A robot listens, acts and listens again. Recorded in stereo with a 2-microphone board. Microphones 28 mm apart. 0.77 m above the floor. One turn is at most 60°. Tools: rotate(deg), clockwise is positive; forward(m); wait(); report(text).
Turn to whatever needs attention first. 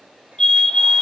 rotate(-25)
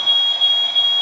report("Found it: a fire alarm, straight ahead, 2 to 4 m away.")